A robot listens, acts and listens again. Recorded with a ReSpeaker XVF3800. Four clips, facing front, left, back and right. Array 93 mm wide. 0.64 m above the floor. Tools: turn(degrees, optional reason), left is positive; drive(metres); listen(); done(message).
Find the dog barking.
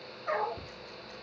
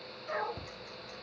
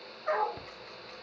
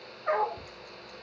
turn(degrees=-115, reason="The dog barking: 115° right.")
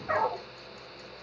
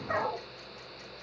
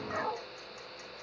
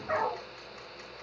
turn(degrees=-25, reason="The dog barking is now 25° right.")
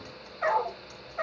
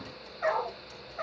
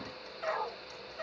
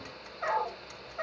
done("Facing the dog barking.")